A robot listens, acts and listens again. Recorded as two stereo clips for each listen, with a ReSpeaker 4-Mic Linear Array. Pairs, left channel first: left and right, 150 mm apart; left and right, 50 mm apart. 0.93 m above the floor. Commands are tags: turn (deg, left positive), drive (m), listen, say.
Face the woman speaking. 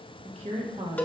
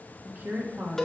<turn deg="-35"/>
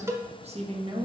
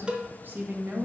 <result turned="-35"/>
<turn deg="-35"/>
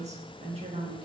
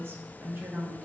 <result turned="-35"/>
<turn deg="-35"/>
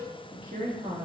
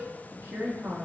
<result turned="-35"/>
<turn deg="-125"/>
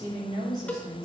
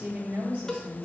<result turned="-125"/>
<turn deg="-30"/>
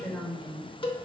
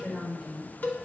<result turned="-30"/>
<say>Found it: a woman speaking, straight ahead.</say>